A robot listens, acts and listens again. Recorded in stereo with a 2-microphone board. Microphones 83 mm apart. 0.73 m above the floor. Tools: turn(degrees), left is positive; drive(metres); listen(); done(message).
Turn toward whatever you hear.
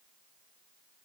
listen()
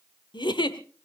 turn(degrees=90)
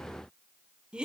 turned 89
turn(degrees=-10)
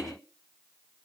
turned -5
listen()
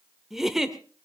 done("Facing the giggle.")